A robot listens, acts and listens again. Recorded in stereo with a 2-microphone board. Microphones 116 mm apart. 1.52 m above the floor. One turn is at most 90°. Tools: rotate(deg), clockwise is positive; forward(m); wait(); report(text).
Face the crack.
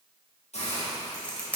rotate(-30)
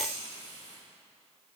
wait()
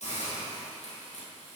report("I heard a crack, but can't make it out now. It was about 15° right or 135° left.")